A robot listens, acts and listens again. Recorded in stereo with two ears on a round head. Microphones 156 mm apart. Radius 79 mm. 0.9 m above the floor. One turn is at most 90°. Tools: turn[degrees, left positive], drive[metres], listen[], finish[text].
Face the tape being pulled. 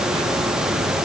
Action: listen[]
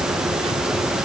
Action: listen[]
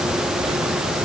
Action: finish[I can't make out tape being pulled.]